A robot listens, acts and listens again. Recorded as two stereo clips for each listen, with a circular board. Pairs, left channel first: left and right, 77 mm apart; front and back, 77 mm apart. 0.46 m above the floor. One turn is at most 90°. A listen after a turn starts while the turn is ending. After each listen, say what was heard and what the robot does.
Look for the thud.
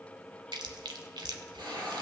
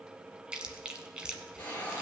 Keep listening.
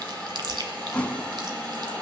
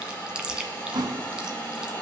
The thud: 165° left. Turn 90° left.
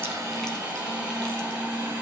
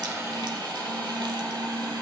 Nothing new. It was at 75° left. Turn 75° left.
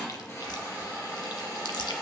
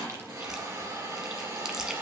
Facing where the thud came from. I can't hear it now.